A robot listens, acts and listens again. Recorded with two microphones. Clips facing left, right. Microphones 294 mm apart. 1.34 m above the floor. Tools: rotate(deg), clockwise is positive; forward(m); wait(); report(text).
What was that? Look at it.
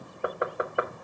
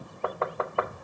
rotate(-15)
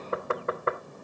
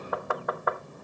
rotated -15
rotate(-150)
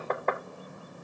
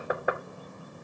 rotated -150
rotate(10)
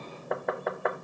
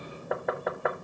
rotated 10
report("Facing the knocking, 1 to 2 m away.")